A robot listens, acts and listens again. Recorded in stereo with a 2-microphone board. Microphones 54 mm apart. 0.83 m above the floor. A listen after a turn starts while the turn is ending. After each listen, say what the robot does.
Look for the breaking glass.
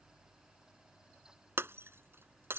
Turn 45° right.
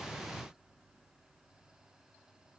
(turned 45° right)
Keep listening.
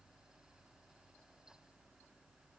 I heard breaking glass, but can't make it out now. It was about straight ahead or 90° right.